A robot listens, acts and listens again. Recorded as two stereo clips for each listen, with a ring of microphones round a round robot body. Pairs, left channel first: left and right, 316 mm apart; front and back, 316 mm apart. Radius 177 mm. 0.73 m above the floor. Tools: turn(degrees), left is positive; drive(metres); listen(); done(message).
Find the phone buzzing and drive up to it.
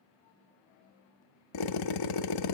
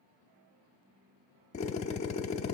listen()
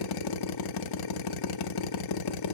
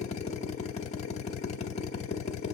listen()
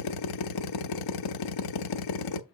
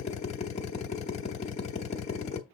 done("I can't make out a phone buzzing to turn to.")